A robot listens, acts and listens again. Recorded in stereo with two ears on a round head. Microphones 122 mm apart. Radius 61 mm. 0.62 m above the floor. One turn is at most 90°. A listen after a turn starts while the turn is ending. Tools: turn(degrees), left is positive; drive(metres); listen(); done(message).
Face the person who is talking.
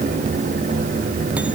listen()
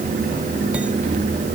listen()
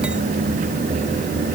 done("I can't make out anyone speaking.")